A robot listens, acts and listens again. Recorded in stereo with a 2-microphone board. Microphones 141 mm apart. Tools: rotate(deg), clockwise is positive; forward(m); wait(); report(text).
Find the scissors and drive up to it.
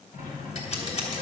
rotate(-55)
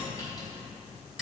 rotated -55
wait()
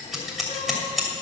forward(1.0)
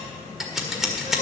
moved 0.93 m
forward(1.0)
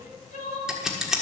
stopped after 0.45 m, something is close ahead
report("Arrived at the scissors, straight ahead.")